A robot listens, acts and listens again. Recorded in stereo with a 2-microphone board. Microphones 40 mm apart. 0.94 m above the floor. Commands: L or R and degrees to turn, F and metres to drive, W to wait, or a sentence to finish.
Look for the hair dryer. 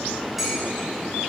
W
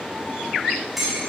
W
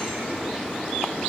I can't make out a hair dryer to turn to.